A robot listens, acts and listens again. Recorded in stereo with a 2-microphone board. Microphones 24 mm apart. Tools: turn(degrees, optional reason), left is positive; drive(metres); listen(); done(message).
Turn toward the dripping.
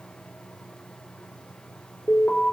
listen()
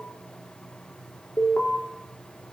listen()
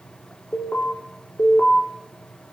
done("I can't make out dripping, only an alarm.")